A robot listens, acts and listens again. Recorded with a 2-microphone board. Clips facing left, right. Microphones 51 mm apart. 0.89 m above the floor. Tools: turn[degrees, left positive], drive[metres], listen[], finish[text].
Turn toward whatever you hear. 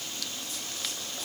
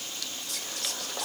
Thought: The whispering: about 60° right or 120° right.
Action: turn[-60]
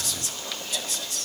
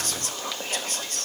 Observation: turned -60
Thought: So it is at 50° right.
Action: turn[-50]
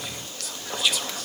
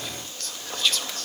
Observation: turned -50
Thought: The whispering is now 10° left.
Action: turn[10]
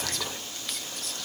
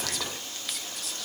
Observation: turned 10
Action: finish[Facing the whispering, under 1 m away.]